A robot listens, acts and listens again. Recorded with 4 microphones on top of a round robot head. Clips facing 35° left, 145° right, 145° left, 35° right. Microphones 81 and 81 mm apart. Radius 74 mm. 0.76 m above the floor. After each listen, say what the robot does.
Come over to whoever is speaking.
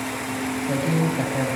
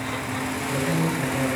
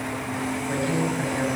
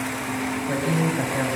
Turn 35° left.
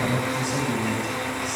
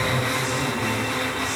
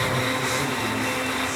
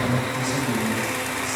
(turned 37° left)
Keep listening.
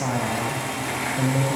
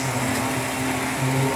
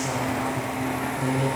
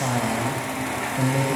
Drive 1.0 m forward.
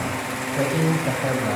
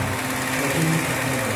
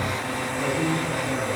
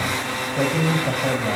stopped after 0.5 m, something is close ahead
Blocked. The man speaking is further on, straight ahead.